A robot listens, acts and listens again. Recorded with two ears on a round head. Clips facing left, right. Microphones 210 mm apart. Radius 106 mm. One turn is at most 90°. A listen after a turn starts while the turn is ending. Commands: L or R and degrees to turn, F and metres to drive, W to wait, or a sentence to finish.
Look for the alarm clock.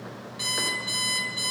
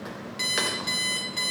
R35
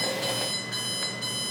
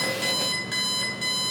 R90
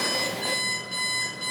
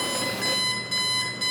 R35
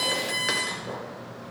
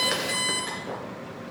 Facing the alarm clock, 2 to 4 m away.